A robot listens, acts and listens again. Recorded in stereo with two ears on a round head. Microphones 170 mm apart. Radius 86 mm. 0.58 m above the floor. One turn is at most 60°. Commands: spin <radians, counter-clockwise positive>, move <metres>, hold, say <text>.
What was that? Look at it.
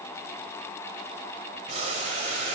spin -0.61
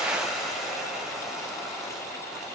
say Facing the boiling, 1 to 2 m away.